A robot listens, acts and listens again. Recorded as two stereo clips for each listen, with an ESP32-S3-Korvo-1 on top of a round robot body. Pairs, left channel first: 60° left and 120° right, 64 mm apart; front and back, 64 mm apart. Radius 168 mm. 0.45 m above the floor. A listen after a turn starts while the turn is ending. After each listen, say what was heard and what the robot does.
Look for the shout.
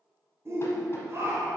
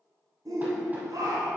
The shout: 165° right. Turn 165° right.
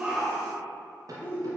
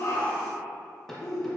Found it: a shout, straight ahead.